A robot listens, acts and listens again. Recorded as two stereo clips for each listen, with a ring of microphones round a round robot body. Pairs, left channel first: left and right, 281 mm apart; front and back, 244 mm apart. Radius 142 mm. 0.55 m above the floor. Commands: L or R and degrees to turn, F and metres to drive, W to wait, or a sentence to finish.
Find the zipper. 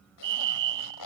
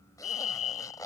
L75
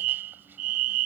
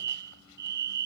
W
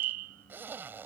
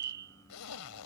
Found it: a zipper, straight ahead.